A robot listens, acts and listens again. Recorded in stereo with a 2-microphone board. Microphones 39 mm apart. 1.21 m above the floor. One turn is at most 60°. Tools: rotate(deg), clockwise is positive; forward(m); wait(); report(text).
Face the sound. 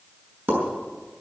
rotate(60)
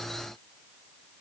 wait()
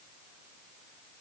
report("I heard a pop, but can't make it out now. It was about 5° right or 55° right.")